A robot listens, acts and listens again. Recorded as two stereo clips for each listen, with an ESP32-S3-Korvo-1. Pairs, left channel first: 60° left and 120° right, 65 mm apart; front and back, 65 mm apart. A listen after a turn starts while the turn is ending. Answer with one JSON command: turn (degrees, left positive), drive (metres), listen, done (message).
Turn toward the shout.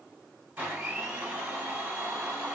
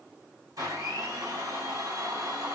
{"listen": true}
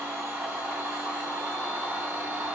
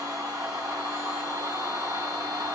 {"listen": true}
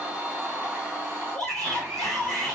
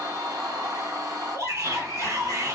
{"turn": 140}
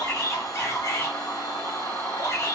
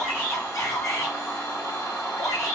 {"turn": 15}
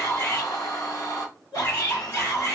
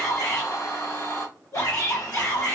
{"done": "Found it: a shout, straight ahead."}